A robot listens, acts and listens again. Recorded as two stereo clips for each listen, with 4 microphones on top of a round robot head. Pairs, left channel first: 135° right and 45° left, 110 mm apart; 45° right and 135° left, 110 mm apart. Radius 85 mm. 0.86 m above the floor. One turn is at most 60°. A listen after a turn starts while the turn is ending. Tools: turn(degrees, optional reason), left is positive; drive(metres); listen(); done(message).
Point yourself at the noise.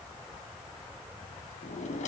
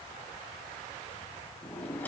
turn(degrees=-60, reason="The drawer: 120° right.")
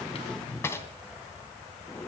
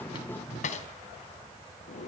turn(degrees=-60, reason="The drawer is now 65° right.")
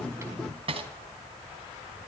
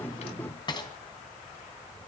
done("Found it: a drawer, straight ahead.")